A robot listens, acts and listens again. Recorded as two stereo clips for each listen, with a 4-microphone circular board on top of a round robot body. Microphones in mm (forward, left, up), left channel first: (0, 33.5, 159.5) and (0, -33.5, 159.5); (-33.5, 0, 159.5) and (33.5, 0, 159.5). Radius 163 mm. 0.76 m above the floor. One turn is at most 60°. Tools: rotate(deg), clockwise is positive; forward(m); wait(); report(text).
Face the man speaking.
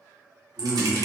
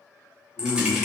rotate(60)
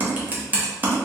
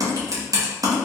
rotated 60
rotate(60)
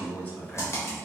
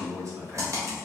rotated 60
rotate(-35)
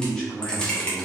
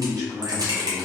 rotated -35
rotate(-20)
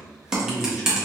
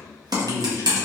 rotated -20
report("Found it: a man speaking, straight ahead.")